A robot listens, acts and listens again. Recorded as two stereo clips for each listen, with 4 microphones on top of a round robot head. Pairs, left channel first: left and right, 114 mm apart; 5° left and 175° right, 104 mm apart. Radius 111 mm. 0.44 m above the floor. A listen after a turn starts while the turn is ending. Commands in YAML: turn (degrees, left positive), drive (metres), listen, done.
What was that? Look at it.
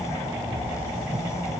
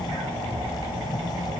listen: true
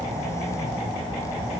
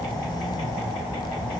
listen: true
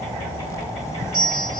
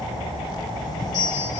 turn: -45
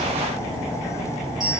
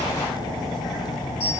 done: "Found it: a bell, straight ahead, 2 to 4 m away."